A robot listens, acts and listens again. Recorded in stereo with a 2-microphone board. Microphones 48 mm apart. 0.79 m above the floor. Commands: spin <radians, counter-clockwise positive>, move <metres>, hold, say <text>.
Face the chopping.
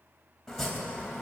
spin 0.52
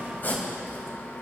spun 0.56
spin 2.44
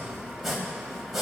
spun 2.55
say Facing the chopping, 2 to 4 m away.